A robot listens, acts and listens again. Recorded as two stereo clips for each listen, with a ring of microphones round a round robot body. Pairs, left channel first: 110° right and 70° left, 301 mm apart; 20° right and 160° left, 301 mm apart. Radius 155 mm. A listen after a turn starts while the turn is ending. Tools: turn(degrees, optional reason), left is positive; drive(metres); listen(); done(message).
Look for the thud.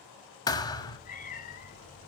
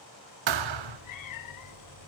turn(degrees=170, reason="The thud: 170° left.")
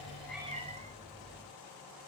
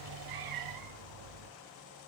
done("I heard a thud from this way, but can't make it out now.")